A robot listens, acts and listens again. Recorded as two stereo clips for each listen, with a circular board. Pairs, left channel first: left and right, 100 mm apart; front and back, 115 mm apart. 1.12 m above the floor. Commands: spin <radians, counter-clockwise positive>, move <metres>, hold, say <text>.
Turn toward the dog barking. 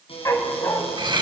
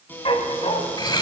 spin 0.52
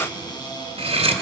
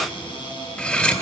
hold
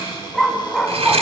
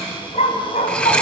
say Facing the dog barking, 2 to 4 m away.